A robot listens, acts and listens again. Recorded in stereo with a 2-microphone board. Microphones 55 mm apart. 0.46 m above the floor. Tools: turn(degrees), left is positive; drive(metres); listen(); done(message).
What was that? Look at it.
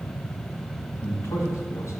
turn(degrees=60)
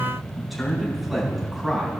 turn(degrees=-10)
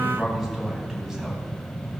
done("Facing the man speaking.")